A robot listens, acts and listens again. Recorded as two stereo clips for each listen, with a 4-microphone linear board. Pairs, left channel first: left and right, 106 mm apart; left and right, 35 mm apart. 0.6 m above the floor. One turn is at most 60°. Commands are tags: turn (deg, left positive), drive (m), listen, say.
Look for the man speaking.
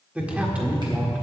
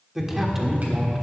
<turn deg="-30"/>
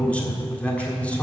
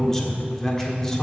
<turn deg="15"/>
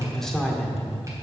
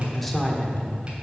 <say>Facing the man speaking, 1 to 2 m away.</say>